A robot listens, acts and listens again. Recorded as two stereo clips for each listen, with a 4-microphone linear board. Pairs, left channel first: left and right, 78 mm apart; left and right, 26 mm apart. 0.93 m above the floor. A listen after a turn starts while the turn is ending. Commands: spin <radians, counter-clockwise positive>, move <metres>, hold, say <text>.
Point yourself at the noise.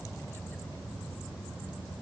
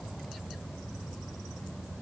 hold
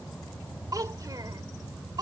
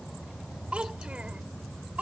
spin -1.05
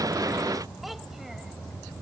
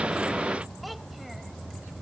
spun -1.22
hold
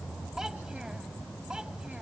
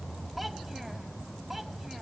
hold
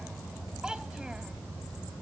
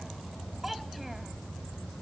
spin -0.17
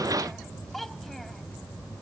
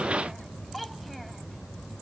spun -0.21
say Found it: a child speaking, straight ahead.